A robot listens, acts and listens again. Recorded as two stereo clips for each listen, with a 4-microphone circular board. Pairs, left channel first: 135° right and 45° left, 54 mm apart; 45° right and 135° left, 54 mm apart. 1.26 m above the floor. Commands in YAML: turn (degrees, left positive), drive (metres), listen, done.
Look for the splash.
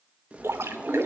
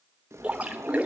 turn: 70
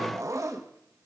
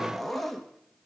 done: "Facing where the splash came from. I can't hear it now."